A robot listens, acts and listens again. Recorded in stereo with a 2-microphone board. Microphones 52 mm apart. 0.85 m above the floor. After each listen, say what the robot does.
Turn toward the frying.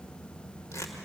Keep listening.
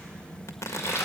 Turn 60° left.
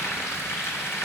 Turn 60° left.
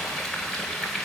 Facing the frying.